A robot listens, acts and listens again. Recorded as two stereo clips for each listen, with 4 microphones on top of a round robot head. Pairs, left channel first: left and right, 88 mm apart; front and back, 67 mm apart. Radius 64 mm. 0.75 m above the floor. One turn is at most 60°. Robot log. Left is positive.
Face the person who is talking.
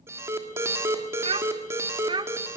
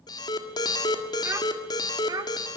note: The child speaking: 130° right.
cmd yaw -60
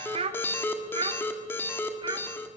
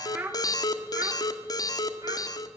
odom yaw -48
note: The child speaking is now 125° right.
cmd yaw -60
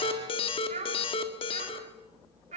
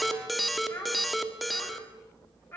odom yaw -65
note: The child speaking is now 75° right.
cmd yaw -60
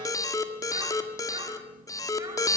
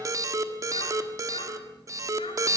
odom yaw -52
note: Nothing new. It was at 20° right.
cmd yaw -20
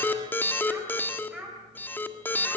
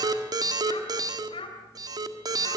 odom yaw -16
end: Facing the child speaking.